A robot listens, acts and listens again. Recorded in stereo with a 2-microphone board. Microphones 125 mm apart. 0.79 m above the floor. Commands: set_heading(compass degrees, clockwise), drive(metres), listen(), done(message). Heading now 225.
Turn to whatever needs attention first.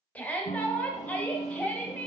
set_heading(195)
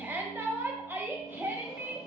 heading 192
set_heading(212)
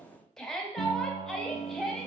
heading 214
done("Found it: a shout, straight ahead, under 1 m away.")